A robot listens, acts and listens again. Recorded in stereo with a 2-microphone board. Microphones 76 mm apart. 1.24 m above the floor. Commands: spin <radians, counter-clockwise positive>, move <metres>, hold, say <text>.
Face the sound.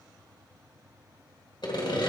spin 1.57
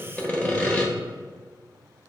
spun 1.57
spin 0.26
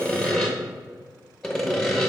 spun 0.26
say Facing the sawing.